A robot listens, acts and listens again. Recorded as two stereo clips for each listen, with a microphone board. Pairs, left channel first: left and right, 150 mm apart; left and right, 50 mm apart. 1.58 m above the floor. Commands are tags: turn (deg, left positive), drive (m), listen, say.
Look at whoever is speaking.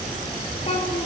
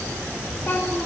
<turn deg="40"/>
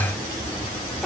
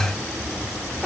<say>Facing the child speaking, over 4 m away.</say>